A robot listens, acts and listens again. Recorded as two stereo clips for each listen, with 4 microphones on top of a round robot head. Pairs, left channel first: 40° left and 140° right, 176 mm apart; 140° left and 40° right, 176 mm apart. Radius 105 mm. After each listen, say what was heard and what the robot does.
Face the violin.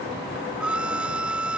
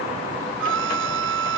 The violin: 55° right. Turn 55° right.
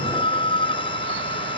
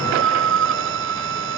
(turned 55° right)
The violin is now 25° right. Turn 25° right.
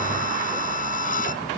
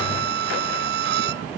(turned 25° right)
The violin is now 10° right. Turn 10° right.
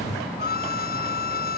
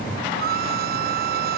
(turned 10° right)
Found it: a violin, straight ahead.